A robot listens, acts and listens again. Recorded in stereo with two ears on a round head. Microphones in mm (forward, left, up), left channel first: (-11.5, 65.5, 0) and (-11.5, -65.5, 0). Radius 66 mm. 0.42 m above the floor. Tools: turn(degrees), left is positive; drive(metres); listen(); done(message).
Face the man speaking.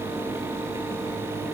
listen()
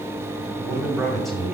turn(degrees=30)
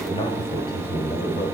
turn(degrees=140)
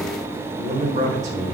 turn(degrees=-45)
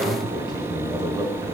turn(degrees=-25)
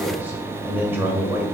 turn(degrees=-15)
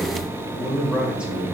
done("Found it: a man speaking, straight ahead, 1 to 2 m away.")